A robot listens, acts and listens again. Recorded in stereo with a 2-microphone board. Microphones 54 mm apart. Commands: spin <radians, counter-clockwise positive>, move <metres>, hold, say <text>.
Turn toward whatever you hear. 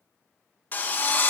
spin 0.61
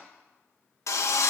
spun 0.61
spin 1.83
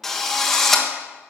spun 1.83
say Found it: a drill, straight ahead, 1 to 2 m away.